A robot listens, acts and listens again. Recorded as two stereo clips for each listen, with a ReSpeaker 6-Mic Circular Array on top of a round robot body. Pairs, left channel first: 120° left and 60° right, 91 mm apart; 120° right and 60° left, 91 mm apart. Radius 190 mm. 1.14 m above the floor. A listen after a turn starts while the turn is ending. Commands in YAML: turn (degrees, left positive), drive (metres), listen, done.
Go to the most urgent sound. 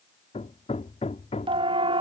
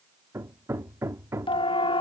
turn: -90
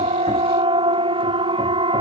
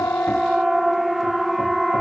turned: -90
turn: -30
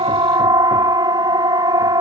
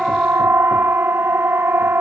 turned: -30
turn: -10
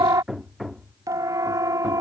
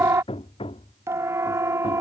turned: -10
drive: 1.0
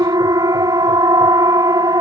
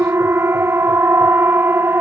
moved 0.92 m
turn: -10
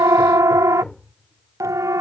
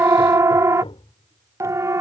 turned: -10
drive: 1.0
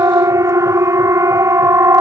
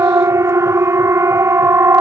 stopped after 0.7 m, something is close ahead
done: "I am next to the siren."